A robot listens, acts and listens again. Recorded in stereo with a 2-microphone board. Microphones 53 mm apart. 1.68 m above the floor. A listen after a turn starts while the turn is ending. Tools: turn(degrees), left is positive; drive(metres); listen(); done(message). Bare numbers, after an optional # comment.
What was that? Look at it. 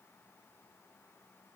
listen()
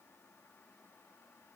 listen()
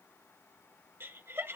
# The laughter: about 50° right or 130° right.
turn(-50)
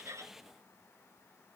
listen()
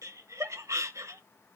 # So it is at 80° right.
turn(-80)
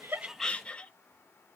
# The laughter is now 20° left.
turn(20)
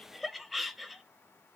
done("Facing the laughter, 1 to 2 m away.")